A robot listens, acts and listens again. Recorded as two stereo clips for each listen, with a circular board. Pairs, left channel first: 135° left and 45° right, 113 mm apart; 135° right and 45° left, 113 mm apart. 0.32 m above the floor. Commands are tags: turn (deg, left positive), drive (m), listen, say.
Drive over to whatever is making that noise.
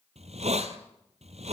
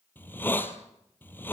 <turn deg="-65"/>
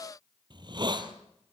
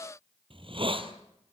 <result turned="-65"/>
<drive m="1.0"/>
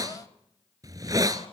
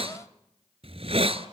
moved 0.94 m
<turn deg="15"/>
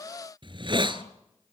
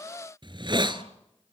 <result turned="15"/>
<drive m="1.0"/>
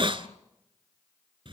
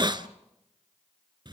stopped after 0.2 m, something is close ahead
<say>Arrived at the hiss, straight ahead.</say>